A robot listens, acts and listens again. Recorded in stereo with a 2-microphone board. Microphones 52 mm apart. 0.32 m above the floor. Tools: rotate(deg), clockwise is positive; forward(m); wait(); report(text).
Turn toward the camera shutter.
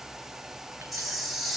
rotate(-30)
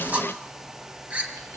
rotate(30)
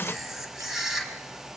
report("Found it: a camera shutter, straight ahead.")